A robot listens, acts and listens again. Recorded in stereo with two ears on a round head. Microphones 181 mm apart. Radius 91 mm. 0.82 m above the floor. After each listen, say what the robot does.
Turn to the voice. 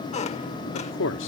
Turn 65° left.
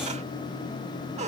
Keep listening.
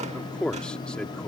Found it: a man speaking, straight ahead.